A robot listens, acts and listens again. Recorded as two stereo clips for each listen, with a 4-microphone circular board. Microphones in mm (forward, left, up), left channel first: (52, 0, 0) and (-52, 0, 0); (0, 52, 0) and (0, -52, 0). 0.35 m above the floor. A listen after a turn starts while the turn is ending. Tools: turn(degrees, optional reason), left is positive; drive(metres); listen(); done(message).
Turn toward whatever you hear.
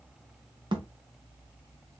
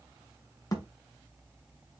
turn(degrees=145, reason="The thud: 145° left.")
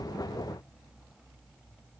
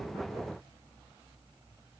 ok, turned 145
done("Facing where the thud came from. I can't hear it now.")